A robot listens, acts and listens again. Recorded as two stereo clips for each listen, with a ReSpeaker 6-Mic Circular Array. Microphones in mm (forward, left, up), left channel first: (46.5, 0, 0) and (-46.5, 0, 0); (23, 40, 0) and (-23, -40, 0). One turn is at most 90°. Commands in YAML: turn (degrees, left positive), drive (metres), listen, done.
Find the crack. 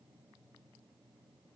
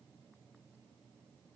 listen: true
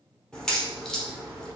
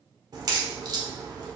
turn: -80
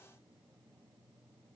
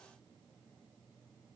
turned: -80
done: "Facing where the crack came from. I can't hear it now."